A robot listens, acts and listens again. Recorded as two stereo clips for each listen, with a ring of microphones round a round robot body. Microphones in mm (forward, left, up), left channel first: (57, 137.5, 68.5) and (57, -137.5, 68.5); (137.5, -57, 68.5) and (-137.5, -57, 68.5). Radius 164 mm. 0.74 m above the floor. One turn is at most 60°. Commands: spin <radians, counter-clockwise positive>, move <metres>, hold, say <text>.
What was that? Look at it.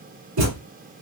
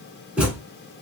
spin -1.05
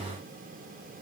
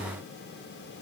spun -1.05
spin -0.61
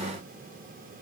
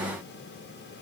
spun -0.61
say Facing where the thud came from. I can't hear it now.